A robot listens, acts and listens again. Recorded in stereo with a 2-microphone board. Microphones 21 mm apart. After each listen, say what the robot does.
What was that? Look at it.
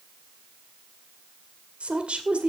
Turn 70° right.
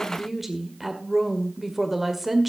Turn 10° right.
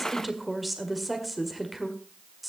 Facing the woman speaking, 1 to 2 m away.